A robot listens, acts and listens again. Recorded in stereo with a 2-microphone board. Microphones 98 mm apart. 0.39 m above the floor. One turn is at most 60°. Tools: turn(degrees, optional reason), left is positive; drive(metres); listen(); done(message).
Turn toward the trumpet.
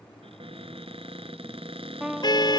turn(degrees=-30)
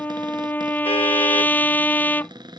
turn(degrees=20, reason="So it is at 20° left.")
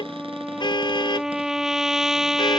done("Found it: a trumpet, straight ahead.")